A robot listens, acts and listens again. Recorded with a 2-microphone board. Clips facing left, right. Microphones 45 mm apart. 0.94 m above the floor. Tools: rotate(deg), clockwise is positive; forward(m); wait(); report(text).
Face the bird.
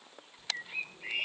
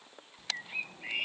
rotate(30)
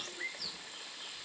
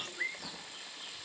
rotate(145)
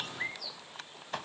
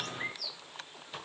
rotate(-15)
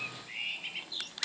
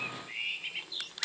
report("Found it: a bird, straight ahead.")